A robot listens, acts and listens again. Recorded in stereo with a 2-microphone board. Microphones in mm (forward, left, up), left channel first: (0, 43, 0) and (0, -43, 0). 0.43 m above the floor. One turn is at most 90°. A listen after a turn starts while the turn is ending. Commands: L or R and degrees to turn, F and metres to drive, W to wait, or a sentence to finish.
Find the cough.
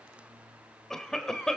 L30
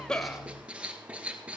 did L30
W
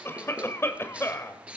L90
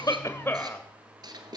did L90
L30
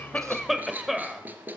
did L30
Found it: a cough, straight ahead, 1 to 2 m away.